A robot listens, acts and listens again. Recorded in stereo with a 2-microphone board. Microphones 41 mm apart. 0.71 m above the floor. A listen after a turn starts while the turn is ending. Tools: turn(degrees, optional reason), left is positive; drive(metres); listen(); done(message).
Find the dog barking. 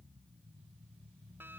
listen()
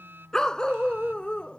turn(degrees=30, reason="The dog barking: about 30° left or 150° left.")
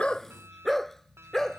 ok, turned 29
turn(degrees=10, reason="So it is at 10° left.")
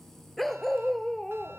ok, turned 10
turn(degrees=10, reason="The dog barking is now 10° left.")
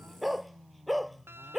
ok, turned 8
done("Found it: a dog barking, straight ahead.")